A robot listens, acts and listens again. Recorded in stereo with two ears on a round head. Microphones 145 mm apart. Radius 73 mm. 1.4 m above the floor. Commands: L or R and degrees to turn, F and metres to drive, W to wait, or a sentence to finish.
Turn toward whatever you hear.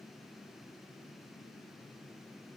W
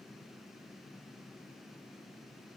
W
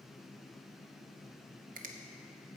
R50
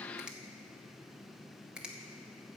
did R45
Facing the finger snap, 1 to 2 m away.